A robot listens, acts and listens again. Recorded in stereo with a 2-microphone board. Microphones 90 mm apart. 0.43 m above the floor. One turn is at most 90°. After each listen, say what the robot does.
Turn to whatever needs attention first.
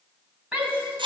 Turn 30° right.
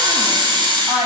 Turn 90° right.
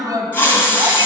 Turn 45° right.
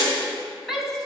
Found it: a shout, straight ahead.